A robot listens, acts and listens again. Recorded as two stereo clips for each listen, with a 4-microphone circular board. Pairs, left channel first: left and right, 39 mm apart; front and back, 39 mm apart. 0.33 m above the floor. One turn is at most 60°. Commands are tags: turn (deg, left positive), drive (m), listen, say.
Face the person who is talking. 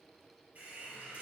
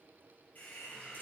<listen/>
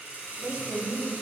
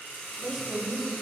<turn deg="-60"/>
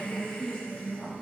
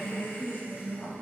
<turn deg="20"/>
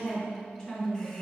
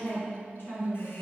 <turn deg="15"/>
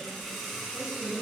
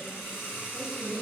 <say>Found it: a woman speaking, straight ahead.</say>